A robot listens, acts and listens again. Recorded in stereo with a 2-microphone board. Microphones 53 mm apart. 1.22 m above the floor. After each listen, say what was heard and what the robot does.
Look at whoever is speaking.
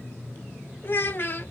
The child speaking: about 40° left or 140° left. Turn 40° left.
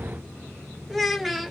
Facing the child speaking, under 1 m away.